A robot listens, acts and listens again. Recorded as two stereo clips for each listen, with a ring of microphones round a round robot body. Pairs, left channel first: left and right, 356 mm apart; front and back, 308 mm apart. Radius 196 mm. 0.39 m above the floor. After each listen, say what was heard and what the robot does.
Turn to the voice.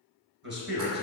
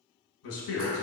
The man speaking: 35° right. Turn 35° right.
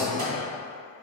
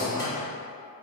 Keep listening.
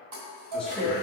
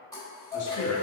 Keep listening.
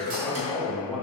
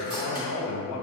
Found it: a man speaking, straight ahead, 1 to 2 m away.